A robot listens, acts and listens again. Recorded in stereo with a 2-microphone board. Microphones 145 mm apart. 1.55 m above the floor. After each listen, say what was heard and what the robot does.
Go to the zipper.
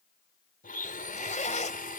The zipper: about 60° left or 120° left. Turn 60° left.
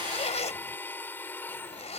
So it is at 55° left. Turn 55° left.
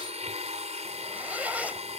The zipper is now 10° right. Turn 10° right.
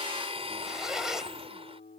Drive 1.0 m forward.
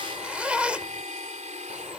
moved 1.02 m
The zipper is now 10° right. Turn 10° right.
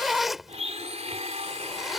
Drive 1.0 m forward.
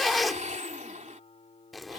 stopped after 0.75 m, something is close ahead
I am next to the zipper.